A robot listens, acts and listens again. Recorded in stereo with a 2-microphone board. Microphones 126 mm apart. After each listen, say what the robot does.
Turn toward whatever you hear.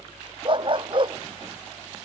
Turn 40° right.
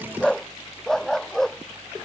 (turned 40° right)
Found it: a dog barking, straight ahead.